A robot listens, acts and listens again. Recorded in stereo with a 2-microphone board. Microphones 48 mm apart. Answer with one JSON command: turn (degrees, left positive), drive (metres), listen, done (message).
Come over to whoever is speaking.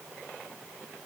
{"listen": true}
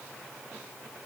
{"listen": true}
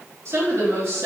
{"turn": -65}
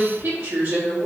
{"turn": -50}
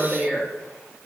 {"drive": 1.0}
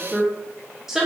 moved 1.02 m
{"turn": -10}
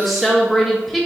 {"drive": 1.0}
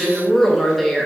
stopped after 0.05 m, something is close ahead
{"done": "Arrived at the woman speaking, straight ahead."}